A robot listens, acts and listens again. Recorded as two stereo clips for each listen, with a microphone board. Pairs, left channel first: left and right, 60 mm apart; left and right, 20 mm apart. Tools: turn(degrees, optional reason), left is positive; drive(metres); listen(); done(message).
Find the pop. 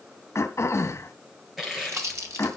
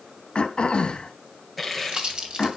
turn(degrees=-55, reason="The pop: about 55° right or 125° right.")
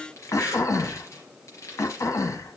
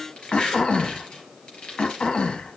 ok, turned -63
listen()
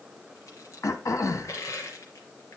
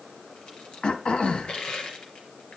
done("I heard a pop, but can't make it out now. It was about 10° left or 60° right.")